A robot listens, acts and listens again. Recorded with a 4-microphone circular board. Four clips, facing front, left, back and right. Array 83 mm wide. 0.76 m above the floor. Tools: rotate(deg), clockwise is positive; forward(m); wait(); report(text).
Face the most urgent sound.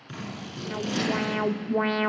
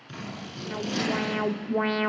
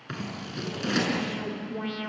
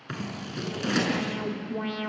rotate(-35)
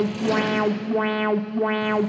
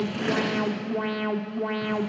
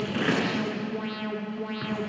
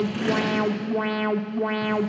rotate(15)
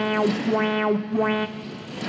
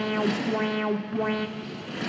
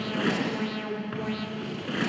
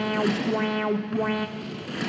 report("Found it: an alarm, straight ahead, 1 to 2 m away.")